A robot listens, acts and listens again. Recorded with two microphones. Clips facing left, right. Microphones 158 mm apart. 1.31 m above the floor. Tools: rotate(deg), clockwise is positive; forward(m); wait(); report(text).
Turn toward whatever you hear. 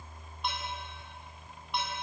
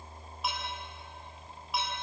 rotate(30)
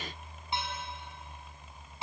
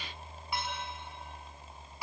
wait()
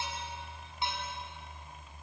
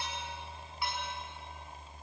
wait()
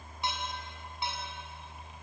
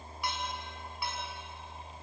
rotate(-25)
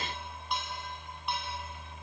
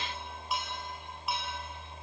report("Facing the dishes clattering.")